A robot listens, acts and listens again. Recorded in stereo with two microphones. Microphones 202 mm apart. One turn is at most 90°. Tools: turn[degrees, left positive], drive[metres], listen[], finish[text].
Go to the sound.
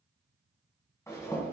Thought: The zipper: about 15° left or 165° left.
Action: turn[15]
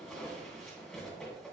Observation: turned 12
Action: drive[1.0]
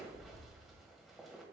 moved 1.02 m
Action: drive[1.0]
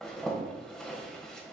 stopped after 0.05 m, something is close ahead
Action: finish[I am next to the zipper.]